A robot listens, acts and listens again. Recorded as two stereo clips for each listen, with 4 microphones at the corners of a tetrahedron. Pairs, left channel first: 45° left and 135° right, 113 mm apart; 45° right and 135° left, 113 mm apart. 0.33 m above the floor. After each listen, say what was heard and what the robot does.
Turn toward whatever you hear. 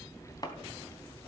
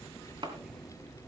The chopping: 95° left. Turn 95° left.
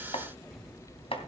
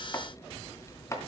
The chopping is now 15° left. Turn 15° left.
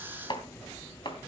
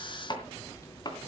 Found it: chopping, straight ahead, 2 to 4 m away.